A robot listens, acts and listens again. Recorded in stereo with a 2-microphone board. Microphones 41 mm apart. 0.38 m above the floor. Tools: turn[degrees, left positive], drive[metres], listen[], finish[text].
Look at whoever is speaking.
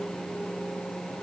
Action: listen[]
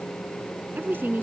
Thought: The woman speaking: about 55° right or 125° right.
Action: turn[-55]
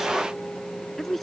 Action: finish[Found it: a woman speaking, straight ahead.]